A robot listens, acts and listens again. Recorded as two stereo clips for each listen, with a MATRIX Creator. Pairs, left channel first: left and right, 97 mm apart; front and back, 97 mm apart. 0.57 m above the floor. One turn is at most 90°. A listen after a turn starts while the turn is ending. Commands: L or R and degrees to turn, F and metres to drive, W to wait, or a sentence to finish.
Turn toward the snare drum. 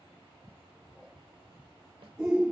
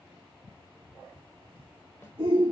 W
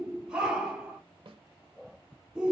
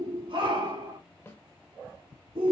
R60
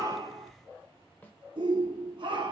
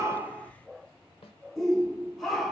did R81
L20
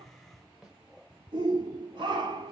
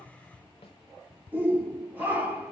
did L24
Facing the snare drum.